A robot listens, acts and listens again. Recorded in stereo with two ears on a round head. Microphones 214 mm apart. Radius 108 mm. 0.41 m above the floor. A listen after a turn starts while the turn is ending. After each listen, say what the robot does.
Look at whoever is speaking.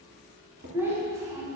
Turn 30° right.
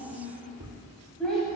Facing the child speaking.